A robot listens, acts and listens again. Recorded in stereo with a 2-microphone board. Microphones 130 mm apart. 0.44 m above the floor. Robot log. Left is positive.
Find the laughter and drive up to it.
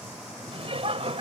note: The laughter: about 50° right or 130° right.
cmd yaw -50
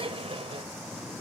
note: So it is at 65° right.
cmd yaw -65
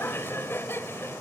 note: The laughter is now 25° left.
cmd yaw +25
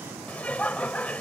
note: The laughter is now 15° left.
cmd yaw +15
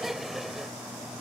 cmd fwd 1.0
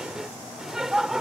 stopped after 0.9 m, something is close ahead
end: Arrived at the laughter, straight ahead.